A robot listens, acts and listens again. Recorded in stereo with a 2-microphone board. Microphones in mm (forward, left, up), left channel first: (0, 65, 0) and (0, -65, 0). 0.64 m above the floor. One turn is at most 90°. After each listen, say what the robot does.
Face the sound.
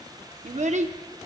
Turn 65° right.
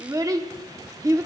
Turn 30° right.
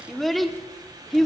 Found it: a child speaking, straight ahead, under 1 m away.